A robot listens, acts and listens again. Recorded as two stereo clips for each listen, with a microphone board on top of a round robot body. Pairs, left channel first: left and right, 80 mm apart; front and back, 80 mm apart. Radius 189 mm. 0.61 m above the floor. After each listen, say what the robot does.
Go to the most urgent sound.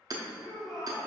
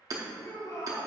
Drive 1.0 m forward.
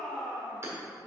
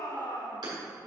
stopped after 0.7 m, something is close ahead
Turn 10° left.
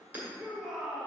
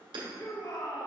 I am next to the shout.